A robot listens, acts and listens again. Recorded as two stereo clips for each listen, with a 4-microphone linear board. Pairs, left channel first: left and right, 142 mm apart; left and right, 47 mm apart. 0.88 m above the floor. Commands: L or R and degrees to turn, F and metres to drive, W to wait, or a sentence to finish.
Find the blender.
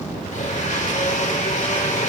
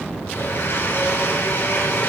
L55
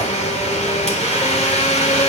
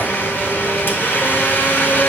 L60
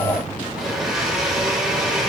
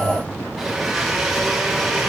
Found it: a blender, straight ahead, 2 to 4 m away.